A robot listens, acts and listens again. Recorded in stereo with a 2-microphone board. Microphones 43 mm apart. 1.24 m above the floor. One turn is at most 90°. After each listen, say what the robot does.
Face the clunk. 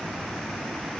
Keep listening.
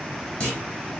Turn 20° left.
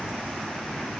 Keep listening.
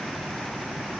I heard a clunk, but can't make it out now. It was about straight ahead or 140° left.